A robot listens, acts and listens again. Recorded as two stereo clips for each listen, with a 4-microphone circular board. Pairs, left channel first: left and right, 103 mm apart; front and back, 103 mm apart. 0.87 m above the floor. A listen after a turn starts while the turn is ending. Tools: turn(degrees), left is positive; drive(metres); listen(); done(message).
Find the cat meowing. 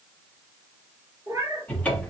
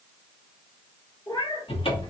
turn(degrees=-30)
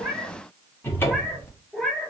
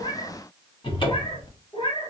done("Facing the cat meowing.")